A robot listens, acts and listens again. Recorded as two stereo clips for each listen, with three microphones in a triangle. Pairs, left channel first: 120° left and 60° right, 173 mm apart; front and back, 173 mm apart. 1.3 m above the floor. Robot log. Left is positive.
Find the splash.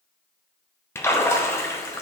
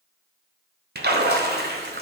note: The splash: 165° right.
cmd yaw -165
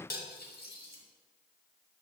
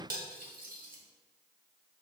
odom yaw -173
note: Nothing new. It was at 10° left.
cmd yaw +10
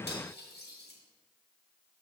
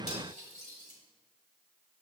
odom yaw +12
end: Facing where the splash came from. I can't hear it now.